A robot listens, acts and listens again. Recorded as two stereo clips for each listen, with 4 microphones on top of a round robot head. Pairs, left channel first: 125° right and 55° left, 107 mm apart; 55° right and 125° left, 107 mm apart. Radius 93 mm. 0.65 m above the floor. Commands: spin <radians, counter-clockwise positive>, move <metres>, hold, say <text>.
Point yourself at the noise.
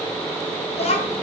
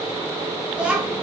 spin -2.62
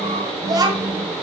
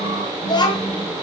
say Facing the child speaking.